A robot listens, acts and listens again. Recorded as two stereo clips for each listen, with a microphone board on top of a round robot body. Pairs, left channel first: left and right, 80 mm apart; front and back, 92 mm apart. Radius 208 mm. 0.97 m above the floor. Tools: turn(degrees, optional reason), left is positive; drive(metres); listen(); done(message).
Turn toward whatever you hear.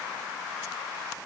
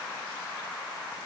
listen()
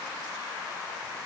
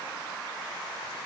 listen()
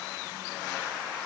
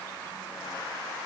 done("I can't make out anything.")